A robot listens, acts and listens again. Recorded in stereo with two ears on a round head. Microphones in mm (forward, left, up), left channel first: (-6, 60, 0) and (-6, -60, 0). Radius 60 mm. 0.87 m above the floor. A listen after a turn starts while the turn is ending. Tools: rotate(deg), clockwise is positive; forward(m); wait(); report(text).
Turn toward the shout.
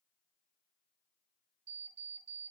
wait()
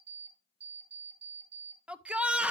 rotate(30)
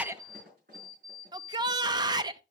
rotate(145)
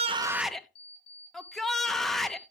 report("Found it: a shout, straight ahead, under 1 m away.")